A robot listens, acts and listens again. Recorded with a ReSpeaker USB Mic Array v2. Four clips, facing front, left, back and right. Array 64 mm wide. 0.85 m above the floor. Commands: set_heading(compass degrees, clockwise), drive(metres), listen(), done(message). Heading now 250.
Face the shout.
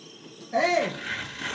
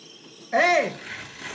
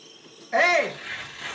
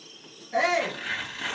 set_heading(110)
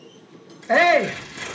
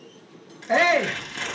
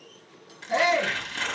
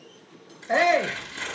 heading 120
set_heading(110)
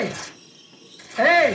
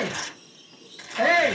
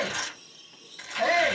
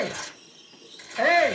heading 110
done("Found it: a shout, straight ahead.")